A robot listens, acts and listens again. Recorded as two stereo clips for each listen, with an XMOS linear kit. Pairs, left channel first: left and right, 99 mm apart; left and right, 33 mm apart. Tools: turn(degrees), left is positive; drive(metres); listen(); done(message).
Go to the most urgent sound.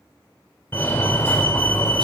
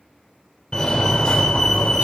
turn(degrees=25)
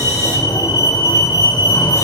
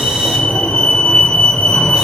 turn(degrees=125)
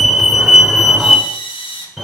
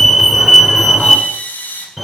drive(metres=1.0)
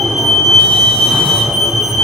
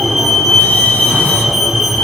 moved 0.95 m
turn(degrees=-10)
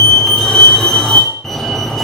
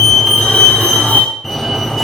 drive(metres=1.0)
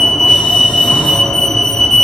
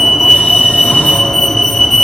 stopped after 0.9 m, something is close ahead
turn(degrees=10)
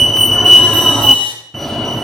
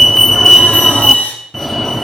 done("I am next to the fire alarm.")